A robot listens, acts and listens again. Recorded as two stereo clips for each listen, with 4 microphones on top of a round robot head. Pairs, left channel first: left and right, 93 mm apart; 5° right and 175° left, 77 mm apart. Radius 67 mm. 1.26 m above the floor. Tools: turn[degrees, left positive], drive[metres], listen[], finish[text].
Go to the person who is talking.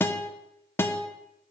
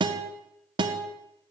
Action: listen[]
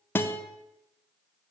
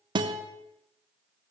Action: listen[]
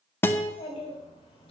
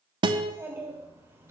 Thought: The child speaking: 115° left.
Action: turn[115]
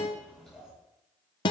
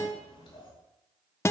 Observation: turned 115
Action: drive[1.0]
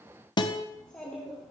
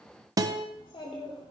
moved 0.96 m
Thought: The child speaking is now 10° left.
Action: turn[10]
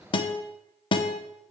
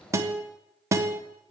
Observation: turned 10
Action: drive[1.0]
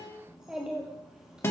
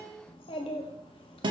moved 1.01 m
Action: drive[1.0]
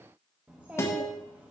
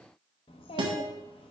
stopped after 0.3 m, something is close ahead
Thought: The child speaking is now 10° right.
Action: turn[-10]
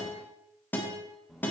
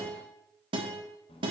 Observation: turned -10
Action: finish[Arrived at the child speaking, straight ahead.]